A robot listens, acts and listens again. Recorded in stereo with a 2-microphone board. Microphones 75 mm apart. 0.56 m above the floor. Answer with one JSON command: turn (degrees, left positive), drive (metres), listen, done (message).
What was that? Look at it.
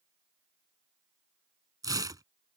{"turn": -65}
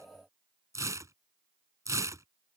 {"turn": -50}
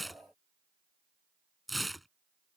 {"done": "Found it: tearing paper, straight ahead."}